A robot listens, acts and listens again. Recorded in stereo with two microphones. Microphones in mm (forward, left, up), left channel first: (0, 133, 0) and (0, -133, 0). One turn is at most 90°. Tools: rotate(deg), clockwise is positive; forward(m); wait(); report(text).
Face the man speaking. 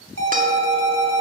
wait()
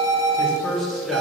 rotate(-30)
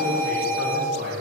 rotate(40)
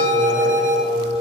wait()
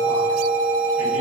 wait()
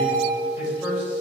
report("Facing the man speaking, over 4 m away.")